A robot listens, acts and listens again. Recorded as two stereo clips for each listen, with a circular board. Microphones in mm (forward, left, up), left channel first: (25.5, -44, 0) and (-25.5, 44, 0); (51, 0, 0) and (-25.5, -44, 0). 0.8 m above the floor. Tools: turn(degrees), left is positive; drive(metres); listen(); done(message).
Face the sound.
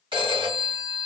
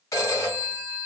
turn(degrees=85)
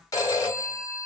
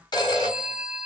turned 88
done("Facing the phone ringing, 1 to 2 m away.")